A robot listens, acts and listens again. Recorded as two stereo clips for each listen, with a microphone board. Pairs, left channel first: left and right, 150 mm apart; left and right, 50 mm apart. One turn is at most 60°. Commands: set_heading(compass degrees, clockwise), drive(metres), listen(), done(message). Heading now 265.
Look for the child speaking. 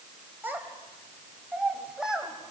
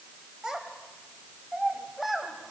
set_heading(295)
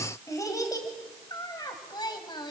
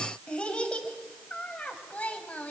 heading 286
set_heading(256)
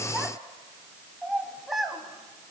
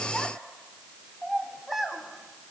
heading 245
done("Facing the child speaking, 2 to 4 m away.")